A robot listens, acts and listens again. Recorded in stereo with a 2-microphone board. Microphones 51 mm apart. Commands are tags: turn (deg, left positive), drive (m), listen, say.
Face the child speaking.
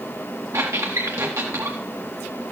<listen/>
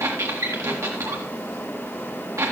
<listen/>
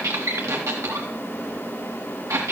<say>I can't make out a child speaking to turn to.</say>